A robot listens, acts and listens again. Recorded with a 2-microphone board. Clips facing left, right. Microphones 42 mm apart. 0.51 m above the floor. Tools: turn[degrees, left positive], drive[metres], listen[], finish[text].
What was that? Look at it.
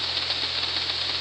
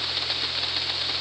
Action: listen[]
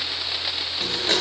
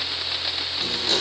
Thought: The blender: about 40° left or 140° left.
Action: turn[40]
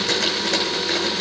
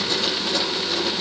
Thought: So it is at 105° left.
Action: turn[105]
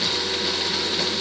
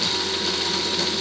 Thought: The blender is now 15° left.
Action: turn[15]
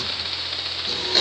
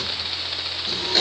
Action: finish[Facing the blender, over 4 m away.]